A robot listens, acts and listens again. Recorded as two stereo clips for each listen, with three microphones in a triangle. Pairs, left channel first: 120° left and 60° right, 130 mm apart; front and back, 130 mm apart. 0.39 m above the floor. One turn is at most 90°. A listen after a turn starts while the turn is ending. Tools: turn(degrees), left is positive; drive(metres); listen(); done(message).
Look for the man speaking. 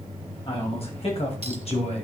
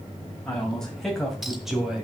turn(degrees=90)
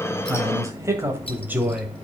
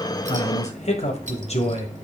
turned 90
turn(degrees=20)
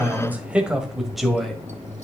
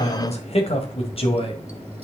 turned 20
turn(degrees=35)
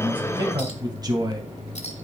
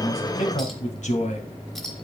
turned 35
done("Facing the man speaking, 2 to 4 m away.")